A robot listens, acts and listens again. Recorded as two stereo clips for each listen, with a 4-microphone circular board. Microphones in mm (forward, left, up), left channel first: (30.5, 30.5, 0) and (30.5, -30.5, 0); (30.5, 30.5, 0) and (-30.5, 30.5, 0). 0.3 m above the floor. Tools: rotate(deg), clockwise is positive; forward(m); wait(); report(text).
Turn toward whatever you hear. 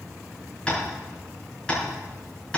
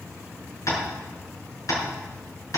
rotate(-20)
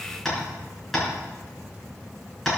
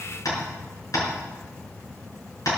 report("Found it: tapping, straight ahead, over 4 m away.")